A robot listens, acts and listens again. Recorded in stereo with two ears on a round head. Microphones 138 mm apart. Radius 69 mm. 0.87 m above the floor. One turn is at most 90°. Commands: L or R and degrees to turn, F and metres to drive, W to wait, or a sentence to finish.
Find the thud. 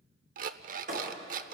R50
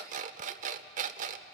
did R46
W
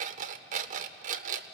I heard a thud, but can't make it out now. It was about 5° right or 85° right.